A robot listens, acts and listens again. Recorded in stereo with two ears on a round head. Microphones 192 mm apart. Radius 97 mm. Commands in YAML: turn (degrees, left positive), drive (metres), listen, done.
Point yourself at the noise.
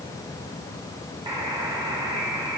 turn: -20
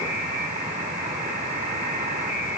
turn: -140
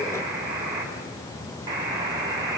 turn: -15
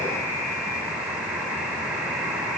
done: "Facing the buzzer, over 4 m away."